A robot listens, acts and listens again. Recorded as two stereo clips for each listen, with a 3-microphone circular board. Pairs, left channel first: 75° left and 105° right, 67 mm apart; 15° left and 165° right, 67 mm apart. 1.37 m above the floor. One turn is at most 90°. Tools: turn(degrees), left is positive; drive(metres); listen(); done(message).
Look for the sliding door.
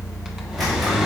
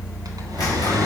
turn(degrees=-10)
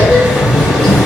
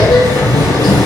done("Found it: a sliding door, straight ahead, 2 to 4 m away.")